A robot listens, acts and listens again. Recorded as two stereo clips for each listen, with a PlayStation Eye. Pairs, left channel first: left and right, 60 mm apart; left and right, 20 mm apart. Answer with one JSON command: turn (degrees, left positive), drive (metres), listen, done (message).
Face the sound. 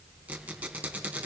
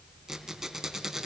{"turn": -30}
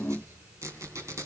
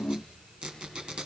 {"turn": -120}
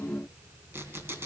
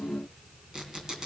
{"turn": -40}
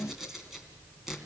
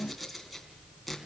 {"done": "Found it: a squeak, straight ahead."}